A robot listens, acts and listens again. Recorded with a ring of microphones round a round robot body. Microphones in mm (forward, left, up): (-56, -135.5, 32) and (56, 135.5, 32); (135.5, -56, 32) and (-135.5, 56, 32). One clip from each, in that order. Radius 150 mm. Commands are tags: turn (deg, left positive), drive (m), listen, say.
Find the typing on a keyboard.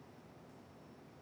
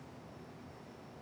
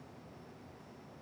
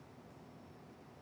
<listen/>
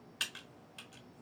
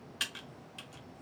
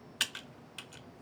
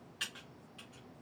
<turn deg="-20"/>
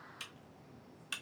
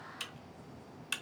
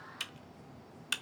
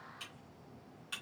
<say>Found it: typing on a keyboard, straight ahead.</say>